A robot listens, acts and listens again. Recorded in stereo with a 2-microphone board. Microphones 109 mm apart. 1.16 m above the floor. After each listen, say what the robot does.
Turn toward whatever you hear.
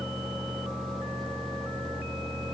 Keep listening.
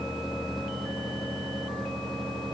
Keep listening.
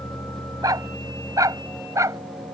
Turn 30° right.
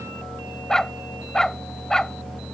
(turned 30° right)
Facing the dog barking.